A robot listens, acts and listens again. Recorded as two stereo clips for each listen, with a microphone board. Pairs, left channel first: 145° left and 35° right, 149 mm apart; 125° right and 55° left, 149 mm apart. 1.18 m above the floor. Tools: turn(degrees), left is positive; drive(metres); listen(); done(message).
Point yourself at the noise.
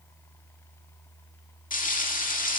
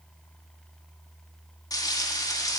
turn(degrees=170)
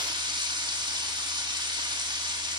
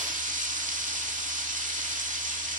turn(degrees=25)
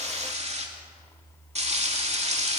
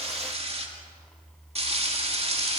turn(degrees=10)
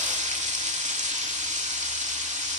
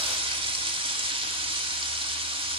done("Found it: frying, straight ahead.")